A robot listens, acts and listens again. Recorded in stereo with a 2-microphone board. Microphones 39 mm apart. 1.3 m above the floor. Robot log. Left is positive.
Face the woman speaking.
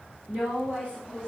note: The woman speaking: about 30° right or 150° right.
cmd yaw -30
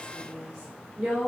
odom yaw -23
note: So it is at 130° right.
cmd yaw -130
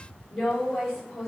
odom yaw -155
note: The woman speaking is now 20° left.
cmd yaw +20
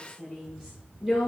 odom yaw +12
end: Facing the woman speaking, over 4 m away.